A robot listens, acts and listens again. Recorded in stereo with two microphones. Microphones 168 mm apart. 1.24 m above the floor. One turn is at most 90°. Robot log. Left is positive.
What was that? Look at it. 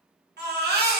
cmd yaw -90
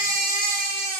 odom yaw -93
note: So it is at 15° left.
cmd yaw +15
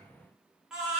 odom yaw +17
end: Found it: a baby crying, straight ahead.